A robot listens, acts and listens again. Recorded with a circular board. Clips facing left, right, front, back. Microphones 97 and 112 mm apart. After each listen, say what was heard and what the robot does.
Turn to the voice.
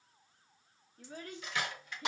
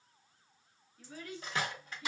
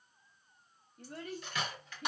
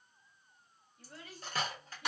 The child speaking: 40° left. Turn 40° left.
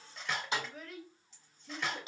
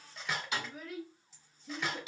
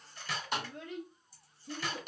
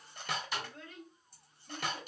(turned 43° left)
Found it: a child speaking, straight ahead, under 1 m away.